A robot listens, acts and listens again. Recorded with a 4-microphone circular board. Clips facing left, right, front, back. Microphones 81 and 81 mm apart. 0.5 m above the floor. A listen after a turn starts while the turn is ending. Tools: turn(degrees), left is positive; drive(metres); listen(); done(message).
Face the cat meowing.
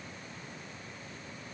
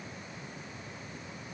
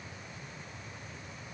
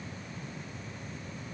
listen()
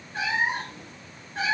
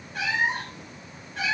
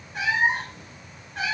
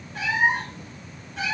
turn(degrees=35)
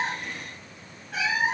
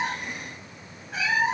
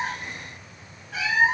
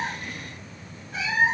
done("Facing the cat meowing.")